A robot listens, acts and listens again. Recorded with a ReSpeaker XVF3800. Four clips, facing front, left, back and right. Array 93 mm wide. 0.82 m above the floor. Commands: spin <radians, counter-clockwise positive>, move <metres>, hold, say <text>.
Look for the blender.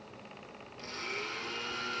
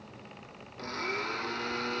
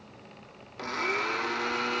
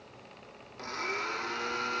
spin -3.05
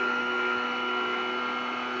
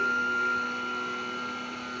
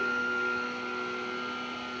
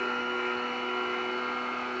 spin -0.61
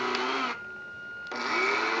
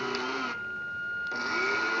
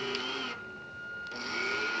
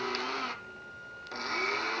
say Found it: a blender, straight ahead, under 1 m away.